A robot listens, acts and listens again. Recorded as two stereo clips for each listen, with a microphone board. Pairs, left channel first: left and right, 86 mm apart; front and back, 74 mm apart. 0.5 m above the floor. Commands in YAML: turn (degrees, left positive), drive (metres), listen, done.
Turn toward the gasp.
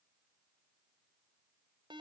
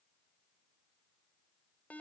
listen: true
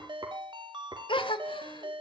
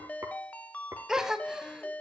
turn: 100
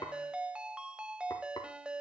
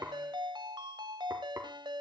done: "Facing where the gasp came from. I can't hear it now."